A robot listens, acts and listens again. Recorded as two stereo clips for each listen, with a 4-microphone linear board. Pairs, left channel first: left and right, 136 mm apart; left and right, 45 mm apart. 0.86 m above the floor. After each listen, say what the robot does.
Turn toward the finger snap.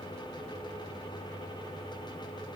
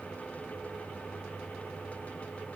Keep listening.
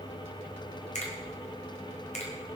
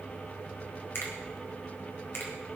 Turn 65° left.
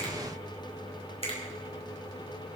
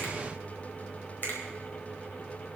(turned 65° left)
Turn 45° left.
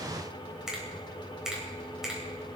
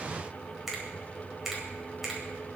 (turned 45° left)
Facing the finger snap.